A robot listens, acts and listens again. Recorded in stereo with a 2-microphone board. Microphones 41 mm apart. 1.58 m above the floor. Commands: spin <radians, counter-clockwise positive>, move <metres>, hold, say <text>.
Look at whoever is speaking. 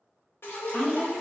spin 0.61
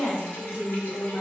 spin 1.92
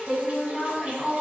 spin 0.26
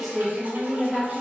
say Facing the woman speaking, 1 to 2 m away.